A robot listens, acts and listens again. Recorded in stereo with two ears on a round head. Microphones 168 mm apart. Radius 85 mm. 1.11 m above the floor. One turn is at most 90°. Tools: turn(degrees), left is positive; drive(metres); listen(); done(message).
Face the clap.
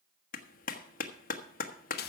turn(degrees=45)
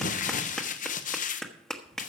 done("Found it: a clap, straight ahead, 1 to 2 m away.")